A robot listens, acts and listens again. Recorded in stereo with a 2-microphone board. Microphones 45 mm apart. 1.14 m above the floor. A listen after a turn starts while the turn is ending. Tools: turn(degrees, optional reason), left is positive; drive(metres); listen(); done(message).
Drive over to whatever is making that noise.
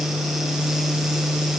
listen()
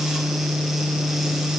listen()
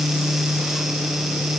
done("I can't make out anything.")